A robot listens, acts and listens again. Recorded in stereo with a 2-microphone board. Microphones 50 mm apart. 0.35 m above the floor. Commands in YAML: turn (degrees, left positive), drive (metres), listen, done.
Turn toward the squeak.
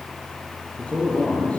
listen: true
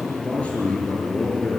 listen: true
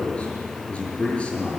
done: "I can't make out a squeak to turn to."